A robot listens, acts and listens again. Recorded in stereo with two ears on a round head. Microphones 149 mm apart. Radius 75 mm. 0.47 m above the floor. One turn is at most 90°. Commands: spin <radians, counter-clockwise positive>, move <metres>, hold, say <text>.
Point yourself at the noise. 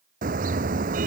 spin -0.87
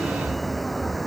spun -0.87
say Found it: a car horn, straight ahead.